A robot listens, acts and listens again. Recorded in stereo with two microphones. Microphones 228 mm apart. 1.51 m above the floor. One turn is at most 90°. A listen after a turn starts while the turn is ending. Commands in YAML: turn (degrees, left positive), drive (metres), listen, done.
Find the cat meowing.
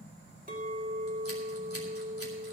listen: true
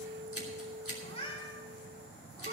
turn: 25
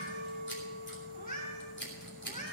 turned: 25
turn: 35
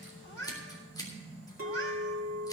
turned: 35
turn: 90
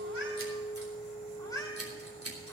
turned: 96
turn: 15
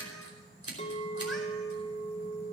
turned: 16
listen: true
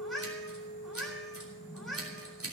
done: "Found it: a cat meowing, straight ahead, over 4 m away."